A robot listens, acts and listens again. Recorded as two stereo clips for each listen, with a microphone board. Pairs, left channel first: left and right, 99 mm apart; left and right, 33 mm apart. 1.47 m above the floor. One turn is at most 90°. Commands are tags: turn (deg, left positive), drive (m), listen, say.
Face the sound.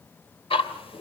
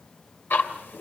<turn deg="70"/>
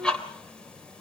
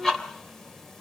<turn deg="10"/>
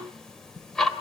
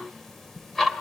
<say>Found it: ticking, straight ahead, 2 to 4 m away.</say>